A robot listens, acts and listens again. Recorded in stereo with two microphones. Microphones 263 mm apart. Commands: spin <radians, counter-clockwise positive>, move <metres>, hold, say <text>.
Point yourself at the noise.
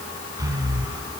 spin -0.52
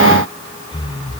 spin 0.26
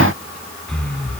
say Facing the breathing, 1 to 2 m away.